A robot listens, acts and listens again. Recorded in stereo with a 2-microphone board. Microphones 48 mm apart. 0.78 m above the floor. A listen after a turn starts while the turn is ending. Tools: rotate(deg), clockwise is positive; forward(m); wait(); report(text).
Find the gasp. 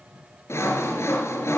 wait()
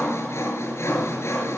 wait()
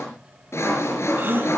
rotate(40)
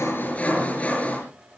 wait()
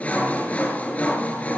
report("I heard a gasp, but can't make it out now. It was about straight ahead or 100° right.")